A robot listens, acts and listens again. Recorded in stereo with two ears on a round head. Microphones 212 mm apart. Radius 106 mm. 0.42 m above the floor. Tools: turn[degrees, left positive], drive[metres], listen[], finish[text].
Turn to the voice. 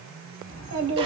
Thought: The child speaking: about 60° right or 120° right.
Action: turn[-60]
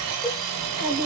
Thought: So it is at 50° right.
Action: turn[-50]
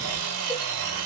Action: listen[]
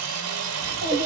Thought: The child speaking is now 25° right.
Action: turn[-25]
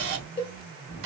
Thought: The child speaking is now 10° right.
Action: turn[-10]
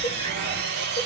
Action: listen[]
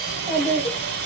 Action: finish[Found it: a child speaking, straight ahead.]